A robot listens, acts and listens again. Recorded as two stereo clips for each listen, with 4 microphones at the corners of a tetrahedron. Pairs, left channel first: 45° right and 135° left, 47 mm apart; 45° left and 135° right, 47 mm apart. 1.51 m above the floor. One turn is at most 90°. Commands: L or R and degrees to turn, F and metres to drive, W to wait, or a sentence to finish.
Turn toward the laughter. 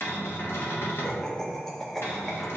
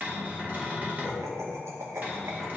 R90
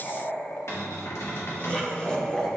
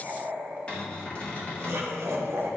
R90
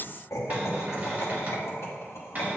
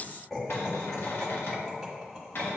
R40
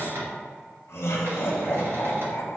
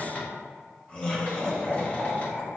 R20
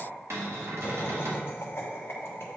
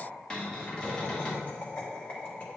Facing the laughter, 1 to 2 m away.